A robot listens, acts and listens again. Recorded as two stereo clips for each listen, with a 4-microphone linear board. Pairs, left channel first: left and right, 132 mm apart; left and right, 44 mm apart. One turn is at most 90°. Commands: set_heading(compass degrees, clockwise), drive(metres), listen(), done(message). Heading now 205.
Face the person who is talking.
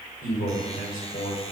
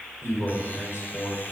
set_heading(115)
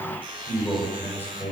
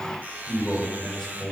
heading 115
set_heading(100)
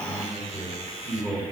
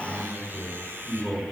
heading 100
done("Found it: a man speaking, straight ahead, over 4 m away.")